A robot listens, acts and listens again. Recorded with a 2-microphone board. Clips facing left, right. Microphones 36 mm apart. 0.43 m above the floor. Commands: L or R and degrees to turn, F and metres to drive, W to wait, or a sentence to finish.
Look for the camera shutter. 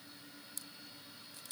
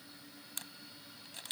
R75
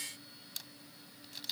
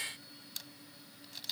Facing the camera shutter.